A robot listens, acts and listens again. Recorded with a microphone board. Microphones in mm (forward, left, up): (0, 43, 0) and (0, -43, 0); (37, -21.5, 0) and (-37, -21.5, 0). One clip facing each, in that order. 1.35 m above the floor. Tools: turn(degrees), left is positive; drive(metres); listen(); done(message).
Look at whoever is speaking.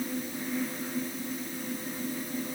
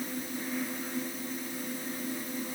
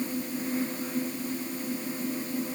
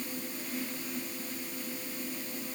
listen()
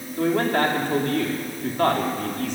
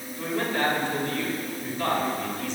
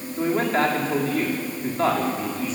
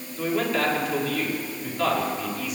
turn(degrees=55)
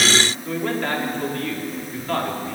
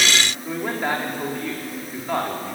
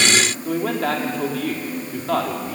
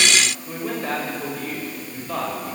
turn(degrees=-15)
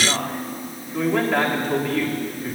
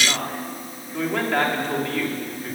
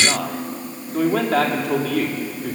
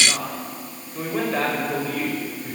done("Facing the man speaking.")